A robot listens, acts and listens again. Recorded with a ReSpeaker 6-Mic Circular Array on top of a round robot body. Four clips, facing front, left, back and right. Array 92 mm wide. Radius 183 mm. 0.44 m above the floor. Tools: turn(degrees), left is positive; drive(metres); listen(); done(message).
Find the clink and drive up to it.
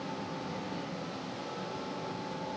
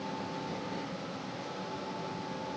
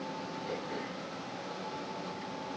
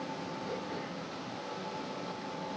listen()
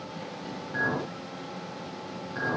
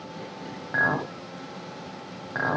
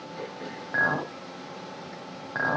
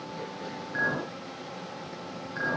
turn(degrees=130)
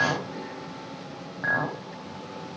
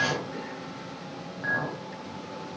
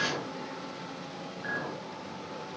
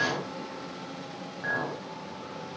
drive(metres=1.0)
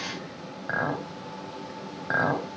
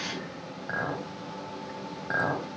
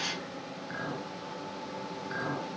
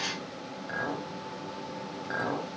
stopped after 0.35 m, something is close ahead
turn(degrees=15)
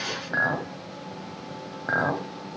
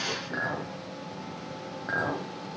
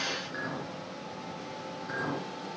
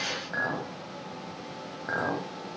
done("Something is in my way. I am facing the clink but have not reached it.")